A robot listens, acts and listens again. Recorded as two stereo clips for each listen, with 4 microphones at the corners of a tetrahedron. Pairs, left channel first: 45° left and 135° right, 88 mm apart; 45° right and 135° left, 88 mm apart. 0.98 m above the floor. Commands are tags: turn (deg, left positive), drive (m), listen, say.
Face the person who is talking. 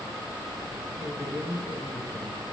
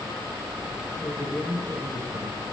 <say>Facing the man speaking.</say>